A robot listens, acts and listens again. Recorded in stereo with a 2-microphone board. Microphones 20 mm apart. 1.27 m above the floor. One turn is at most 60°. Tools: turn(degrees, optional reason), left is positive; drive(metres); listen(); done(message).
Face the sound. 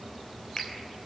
turn(degrees=40, reason="The finger snap: about 40° left or 140° left.")
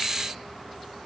listen()
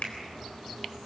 turn(degrees=60, reason="So it is at 100° left.")
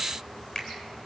turn(degrees=35, reason="The finger snap is now 35° left.")
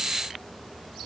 listen()
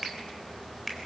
turn(degrees=10, reason="The finger snap is now 10° left.")
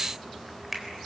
done("Facing the finger snap, 2 to 4 m away.")